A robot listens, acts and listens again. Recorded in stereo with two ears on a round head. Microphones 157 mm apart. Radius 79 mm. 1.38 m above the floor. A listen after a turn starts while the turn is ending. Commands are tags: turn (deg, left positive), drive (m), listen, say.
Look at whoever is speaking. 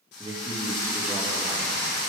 <turn deg="-30"/>
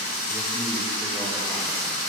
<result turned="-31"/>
<listen/>
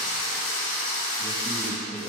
<say>Found it: a man speaking, straight ahead, 2 to 4 m away.</say>